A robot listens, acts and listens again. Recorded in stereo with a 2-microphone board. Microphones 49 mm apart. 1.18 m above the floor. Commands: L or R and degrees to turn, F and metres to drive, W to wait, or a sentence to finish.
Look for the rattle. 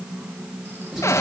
W
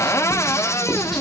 W
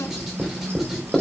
I can't make out a rattle, only writing and a cupboard door.